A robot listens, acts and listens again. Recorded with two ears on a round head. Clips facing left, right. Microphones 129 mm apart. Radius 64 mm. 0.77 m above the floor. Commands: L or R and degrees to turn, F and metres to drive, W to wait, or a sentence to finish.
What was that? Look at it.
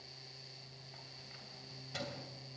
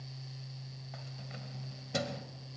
R60
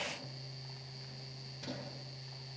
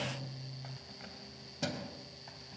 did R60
R85
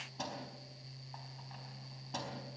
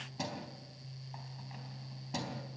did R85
R10
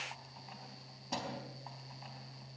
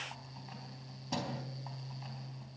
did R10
Facing the keys jangling.